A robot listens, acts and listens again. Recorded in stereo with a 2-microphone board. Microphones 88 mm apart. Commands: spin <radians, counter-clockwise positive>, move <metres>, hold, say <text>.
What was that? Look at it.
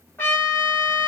spin 0.35
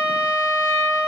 spin 2.36
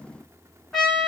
say Found it: a trumpet, straight ahead.